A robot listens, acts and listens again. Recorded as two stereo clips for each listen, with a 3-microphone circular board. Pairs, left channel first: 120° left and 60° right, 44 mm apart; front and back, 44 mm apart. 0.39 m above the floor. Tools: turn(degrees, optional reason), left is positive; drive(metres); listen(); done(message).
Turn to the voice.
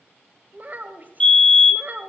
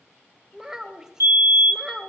turn(degrees=-105, reason="The child speaking: 105° right.")
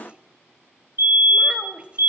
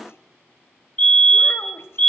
done("Found it: a child speaking, straight ahead.")